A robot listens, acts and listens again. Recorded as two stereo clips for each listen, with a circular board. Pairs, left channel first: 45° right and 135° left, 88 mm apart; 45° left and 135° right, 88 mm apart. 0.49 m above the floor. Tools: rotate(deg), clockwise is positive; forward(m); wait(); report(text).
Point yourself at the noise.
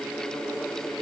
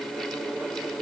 wait()
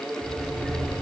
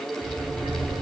rotate(135)
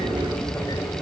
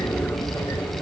report("Found it: a sliding door, straight ahead, under 1 m away.")